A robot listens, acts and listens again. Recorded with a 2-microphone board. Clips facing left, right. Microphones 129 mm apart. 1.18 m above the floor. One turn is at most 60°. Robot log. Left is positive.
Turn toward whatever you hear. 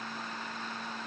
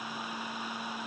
cmd idle
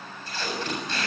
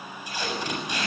cmd yaw -30
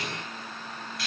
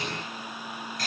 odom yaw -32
note: So it is at 135° right.
cmd yaw -60
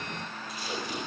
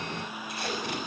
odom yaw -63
note: The tape being pulled is now 70° right.
cmd yaw -60
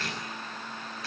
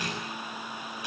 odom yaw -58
note: The tape being pulled is now 15° right.
cmd yaw -15
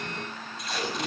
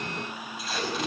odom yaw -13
end: Found it: tape being pulled, straight ahead, over 4 m away.